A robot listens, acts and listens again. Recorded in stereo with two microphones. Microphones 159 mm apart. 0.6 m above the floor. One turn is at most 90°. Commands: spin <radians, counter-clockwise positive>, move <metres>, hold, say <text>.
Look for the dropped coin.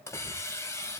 hold
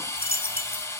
spin -1.13
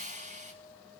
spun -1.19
hold
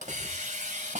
say I heard a dropped coin, but can't make it out now. It was about straight ahead or 45° right.